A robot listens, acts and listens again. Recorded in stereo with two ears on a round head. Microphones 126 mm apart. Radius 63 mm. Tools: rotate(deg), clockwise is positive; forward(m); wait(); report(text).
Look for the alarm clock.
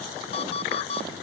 rotate(-45)
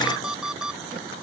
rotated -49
report("Facing the alarm clock.")